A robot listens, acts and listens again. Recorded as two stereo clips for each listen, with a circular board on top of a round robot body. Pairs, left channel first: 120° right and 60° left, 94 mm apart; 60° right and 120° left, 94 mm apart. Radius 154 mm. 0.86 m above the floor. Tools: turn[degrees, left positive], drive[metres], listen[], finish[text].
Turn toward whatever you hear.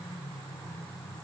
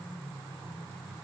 Action: listen[]
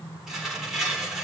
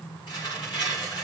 Thought: The tearing paper: 25° right.
Action: turn[-25]
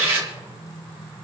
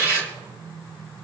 Action: finish[Found it: tearing paper, straight ahead.]